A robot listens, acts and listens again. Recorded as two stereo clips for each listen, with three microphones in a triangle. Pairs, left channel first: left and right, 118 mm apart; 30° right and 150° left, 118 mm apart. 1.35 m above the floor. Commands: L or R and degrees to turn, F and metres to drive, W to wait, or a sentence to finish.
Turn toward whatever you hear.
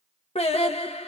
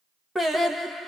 L60
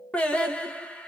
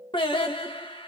L10
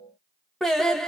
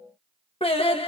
Found it: singing, straight ahead.